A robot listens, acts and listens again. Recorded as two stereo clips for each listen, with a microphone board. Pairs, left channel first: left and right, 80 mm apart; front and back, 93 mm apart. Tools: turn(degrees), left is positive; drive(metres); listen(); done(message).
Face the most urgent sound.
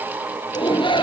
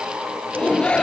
turn(degrees=80)
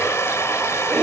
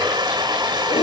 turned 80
done("Found it: a shout, straight ahead.")